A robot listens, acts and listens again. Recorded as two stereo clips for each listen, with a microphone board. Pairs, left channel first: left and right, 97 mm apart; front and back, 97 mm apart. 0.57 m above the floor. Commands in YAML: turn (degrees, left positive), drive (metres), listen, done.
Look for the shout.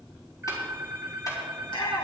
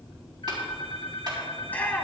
turn: 70
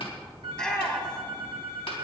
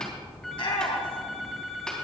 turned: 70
turn: 10
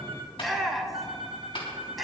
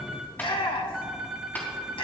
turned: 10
done: "Facing the shout."